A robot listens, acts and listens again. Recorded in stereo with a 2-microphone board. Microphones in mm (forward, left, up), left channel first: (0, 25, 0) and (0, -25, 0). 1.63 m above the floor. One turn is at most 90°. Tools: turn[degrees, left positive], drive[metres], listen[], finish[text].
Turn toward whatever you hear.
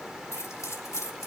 Action: turn[90]
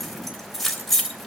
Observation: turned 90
Action: finish[Facing the keys jangling, 2 to 4 m away.]